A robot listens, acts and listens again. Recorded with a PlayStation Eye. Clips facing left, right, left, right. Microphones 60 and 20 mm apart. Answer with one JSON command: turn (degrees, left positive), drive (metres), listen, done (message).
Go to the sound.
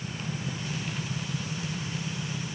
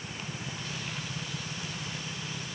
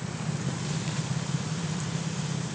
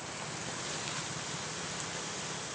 {"listen": true}
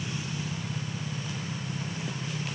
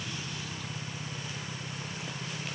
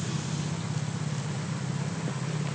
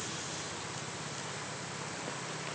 {"listen": true}
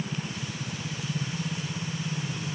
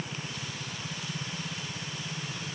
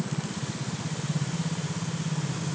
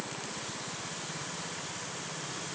{"done": "I can't make out anything."}